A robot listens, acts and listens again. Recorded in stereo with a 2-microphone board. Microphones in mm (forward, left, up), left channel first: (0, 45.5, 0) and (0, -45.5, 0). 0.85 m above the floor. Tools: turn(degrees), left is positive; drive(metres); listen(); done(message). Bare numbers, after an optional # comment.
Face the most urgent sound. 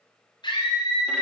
# The scream: about 55° left or 125° left.
turn(55)
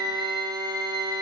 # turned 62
done("Found it: a scream, straight ahead, over 4 m away.")